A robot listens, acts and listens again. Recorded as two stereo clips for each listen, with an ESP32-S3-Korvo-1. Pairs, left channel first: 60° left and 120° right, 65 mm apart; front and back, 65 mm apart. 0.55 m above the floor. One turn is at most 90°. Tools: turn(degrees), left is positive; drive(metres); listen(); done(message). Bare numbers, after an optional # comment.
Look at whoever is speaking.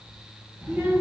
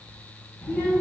# The child speaking: 65° right.
turn(-65)
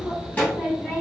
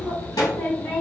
# The child speaking is now 15° right.
turn(-15)
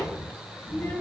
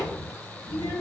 done("Facing the child speaking, 2 to 4 m away.")